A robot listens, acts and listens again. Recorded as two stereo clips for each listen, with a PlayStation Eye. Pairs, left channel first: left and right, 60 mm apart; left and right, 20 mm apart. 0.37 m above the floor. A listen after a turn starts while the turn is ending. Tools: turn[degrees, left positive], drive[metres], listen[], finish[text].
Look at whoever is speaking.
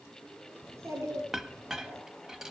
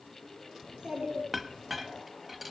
Thought: The child speaking: about 50° right or 130° right.
Action: turn[-50]
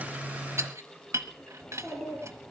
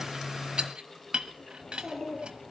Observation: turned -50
Action: finish[Found it: a child speaking, straight ahead.]